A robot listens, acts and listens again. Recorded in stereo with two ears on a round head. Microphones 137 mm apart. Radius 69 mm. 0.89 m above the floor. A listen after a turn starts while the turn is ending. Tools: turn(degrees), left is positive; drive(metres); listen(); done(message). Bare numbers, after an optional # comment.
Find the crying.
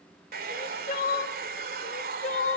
# The crying: about 50° left or 130° left.
turn(50)
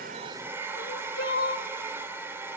# So it is at 75° left.
turn(75)
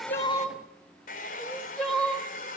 done("Facing the crying, 1 to 2 m away.")